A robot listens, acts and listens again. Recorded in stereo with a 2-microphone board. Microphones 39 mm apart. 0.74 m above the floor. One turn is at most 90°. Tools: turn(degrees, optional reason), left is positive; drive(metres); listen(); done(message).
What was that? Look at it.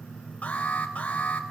turn(degrees=35, reason="The alarm: about 35° left or 145° left.")
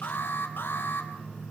turn(degrees=90, reason="So it is at 110° left.")
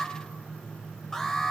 turn(degrees=10, reason="The alarm is now 10° left.")
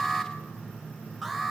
done("Facing the alarm, 2 to 4 m away.")